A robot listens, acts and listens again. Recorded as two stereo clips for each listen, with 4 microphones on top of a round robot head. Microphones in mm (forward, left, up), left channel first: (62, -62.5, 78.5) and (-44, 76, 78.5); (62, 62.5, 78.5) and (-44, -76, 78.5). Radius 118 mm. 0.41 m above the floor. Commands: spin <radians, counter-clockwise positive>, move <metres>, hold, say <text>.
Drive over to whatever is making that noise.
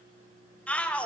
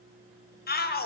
spin 0.52
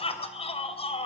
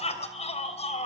move 1.0
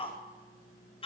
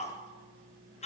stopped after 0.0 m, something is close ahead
say Something is in my way. I am facing the shout but have not reached it.